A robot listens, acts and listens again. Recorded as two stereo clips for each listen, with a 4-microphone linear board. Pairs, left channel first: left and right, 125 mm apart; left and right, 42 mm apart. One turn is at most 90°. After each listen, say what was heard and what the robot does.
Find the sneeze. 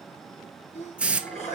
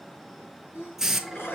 The sneeze: about 60° left or 120° left. Turn 60° left.
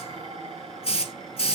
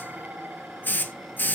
Keep listening.
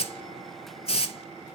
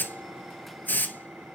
I heard a sneeze, but can't make it out now. It was about straight ahead or 60° left.